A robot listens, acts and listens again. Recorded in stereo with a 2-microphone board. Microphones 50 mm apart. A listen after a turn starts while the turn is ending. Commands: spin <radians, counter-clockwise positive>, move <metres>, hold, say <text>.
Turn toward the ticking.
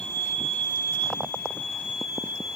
hold
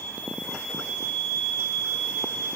hold
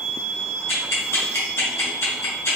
spin 0.96
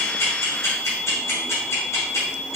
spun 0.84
spin 1.31
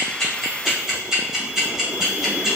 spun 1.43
say Found it: ticking, straight ahead.